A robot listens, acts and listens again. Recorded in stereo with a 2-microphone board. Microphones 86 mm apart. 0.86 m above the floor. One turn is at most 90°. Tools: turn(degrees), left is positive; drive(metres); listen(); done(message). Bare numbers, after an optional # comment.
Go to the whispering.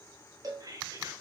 # The whispering: about 45° right or 135° right.
turn(-45)
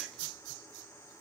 listen()
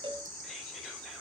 listen()
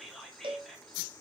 drive(1.0)
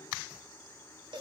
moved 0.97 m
listen()
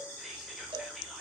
listen()
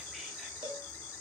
done("Facing where the whispering came from. I can't hear it now. I did not reach it.")